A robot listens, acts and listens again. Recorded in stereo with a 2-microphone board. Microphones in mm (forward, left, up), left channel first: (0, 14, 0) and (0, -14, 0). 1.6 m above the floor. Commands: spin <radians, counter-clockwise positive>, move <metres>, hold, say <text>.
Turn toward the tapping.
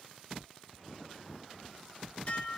hold
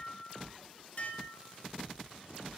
hold
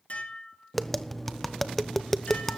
spin 0.52
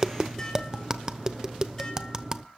spin -0.35
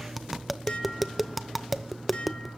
say Facing the tapping, under 1 m away.